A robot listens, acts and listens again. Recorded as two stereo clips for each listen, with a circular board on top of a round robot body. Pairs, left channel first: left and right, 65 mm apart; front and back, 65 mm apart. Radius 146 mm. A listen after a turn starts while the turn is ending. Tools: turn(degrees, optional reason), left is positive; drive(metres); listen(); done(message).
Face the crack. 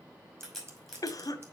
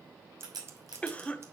turn(degrees=180, reason="The crack: straight behind.")
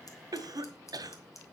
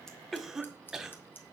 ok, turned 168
turn(degrees=10, reason="Nothing new. It was at 10° left.")
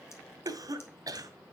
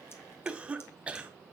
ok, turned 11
done("I heard a crack from this way, but can't make it out now.")